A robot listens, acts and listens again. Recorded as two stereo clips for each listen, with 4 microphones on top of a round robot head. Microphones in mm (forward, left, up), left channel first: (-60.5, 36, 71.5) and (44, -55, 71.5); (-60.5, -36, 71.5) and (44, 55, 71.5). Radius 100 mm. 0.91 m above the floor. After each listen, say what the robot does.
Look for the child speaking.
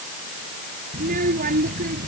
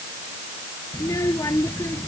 Turn 65° right.
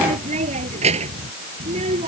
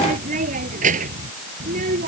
Facing the child speaking.